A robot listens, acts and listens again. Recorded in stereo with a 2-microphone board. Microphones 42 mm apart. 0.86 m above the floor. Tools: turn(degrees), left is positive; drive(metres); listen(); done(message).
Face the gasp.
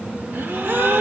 turn(degrees=-65)
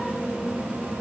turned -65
listen()
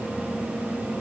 done("I heard a gasp, but can't make it out now. It was about straight ahead or 50° right.")